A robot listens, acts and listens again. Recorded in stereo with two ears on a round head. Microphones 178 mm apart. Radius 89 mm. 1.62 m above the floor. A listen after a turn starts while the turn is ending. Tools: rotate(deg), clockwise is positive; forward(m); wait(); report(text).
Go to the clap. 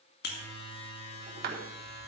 rotate(50)
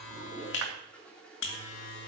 wait()
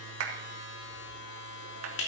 rotate(80)
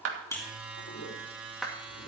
forward(1.0)
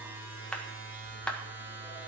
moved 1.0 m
forward(1.0)
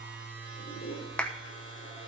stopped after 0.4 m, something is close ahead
report("Arrived at the clap, straight ahead.")